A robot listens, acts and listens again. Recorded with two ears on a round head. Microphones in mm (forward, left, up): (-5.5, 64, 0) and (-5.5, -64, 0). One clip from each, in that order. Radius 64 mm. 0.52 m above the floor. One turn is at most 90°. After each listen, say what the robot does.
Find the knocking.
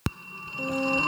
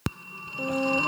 Keep listening.
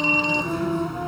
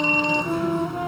Keep listening.
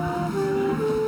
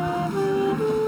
I can't make out knocking, only a flute and a phone ringing.